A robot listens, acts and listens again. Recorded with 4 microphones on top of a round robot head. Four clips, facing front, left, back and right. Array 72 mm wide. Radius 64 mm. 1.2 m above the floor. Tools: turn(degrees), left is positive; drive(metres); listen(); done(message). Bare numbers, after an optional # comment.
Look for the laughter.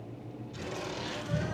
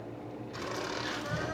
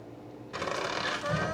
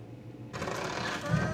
# The laughter: 165° right.
turn(-165)
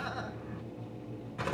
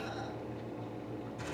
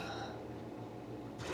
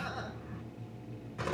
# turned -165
# The laughter is now 35° right.
turn(-35)
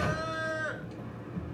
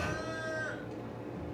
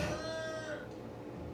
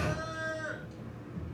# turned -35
done("Found it: laughter, straight ahead.")